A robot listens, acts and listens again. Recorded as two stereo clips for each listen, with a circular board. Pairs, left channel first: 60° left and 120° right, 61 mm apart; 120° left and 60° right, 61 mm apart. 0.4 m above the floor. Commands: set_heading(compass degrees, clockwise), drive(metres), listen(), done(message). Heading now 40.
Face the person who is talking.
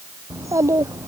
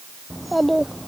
set_heading(190)
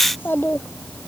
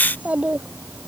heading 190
set_heading(180)
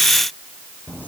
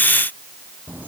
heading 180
done("Facing the child speaking.")